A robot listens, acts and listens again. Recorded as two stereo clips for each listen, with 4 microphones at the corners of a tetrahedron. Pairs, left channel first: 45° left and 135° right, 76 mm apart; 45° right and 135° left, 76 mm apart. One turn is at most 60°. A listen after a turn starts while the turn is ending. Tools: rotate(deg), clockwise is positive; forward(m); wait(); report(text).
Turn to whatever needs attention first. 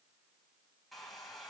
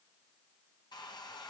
wait()
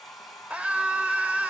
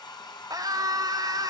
rotate(-60)
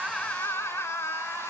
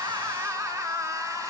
rotate(-60)
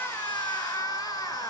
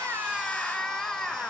rotate(-40)
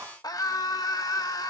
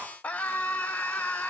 rotate(-25)
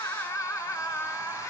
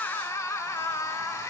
report("Found it: a scream, straight ahead, 1 to 2 m away.")